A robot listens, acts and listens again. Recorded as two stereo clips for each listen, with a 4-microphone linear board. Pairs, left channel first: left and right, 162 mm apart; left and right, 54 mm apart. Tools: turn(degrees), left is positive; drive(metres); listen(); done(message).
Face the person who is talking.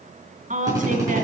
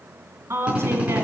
turn(degrees=-60)
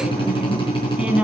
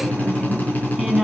turn(degrees=-10)
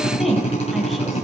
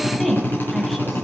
done("Found it: a woman speaking, straight ahead, 2 to 4 m away.")